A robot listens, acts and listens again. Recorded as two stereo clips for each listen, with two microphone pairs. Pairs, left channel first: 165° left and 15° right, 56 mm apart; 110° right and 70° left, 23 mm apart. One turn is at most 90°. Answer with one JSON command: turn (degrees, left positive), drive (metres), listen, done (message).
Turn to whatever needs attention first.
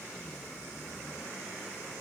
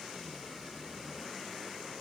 {"listen": true}
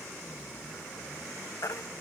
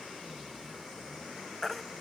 {"turn": 90}
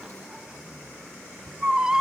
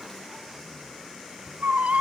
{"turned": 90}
{"turn": 60}
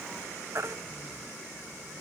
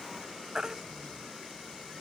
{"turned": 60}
{"turn": 15}
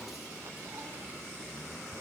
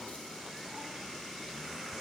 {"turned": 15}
{"listen": true}
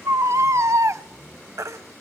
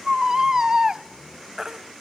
{"done": "Facing the baby crying, under 1 m away."}